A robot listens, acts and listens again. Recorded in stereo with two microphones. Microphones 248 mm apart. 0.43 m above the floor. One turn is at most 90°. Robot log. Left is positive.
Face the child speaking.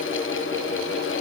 cmd idle
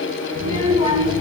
note: The child speaking: about 20° right or 160° right.
cmd yaw -20
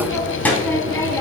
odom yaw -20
note: So it is at 15° left.
cmd yaw +15
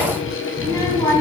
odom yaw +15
note: The child speaking is now 15° left.
cmd yaw +15
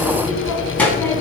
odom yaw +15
note: The child speaking is now 10° left.
cmd yaw +10
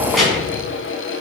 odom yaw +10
end: Found it: a child speaking, straight ahead.